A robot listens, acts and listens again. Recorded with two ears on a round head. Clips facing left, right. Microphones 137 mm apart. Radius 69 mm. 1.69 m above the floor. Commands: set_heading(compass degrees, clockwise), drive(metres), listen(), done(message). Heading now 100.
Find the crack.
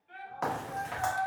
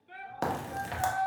set_heading(140)
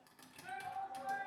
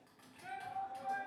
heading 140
listen()
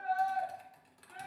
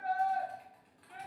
done("I heard a crack, but can't make it out now. It was about straight ahead or 100° right.")